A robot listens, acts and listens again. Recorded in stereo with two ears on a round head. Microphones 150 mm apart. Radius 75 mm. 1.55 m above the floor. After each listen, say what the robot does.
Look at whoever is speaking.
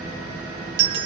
Keep listening.
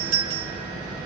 Keep listening.
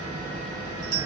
I can't make out anyone speaking to turn to.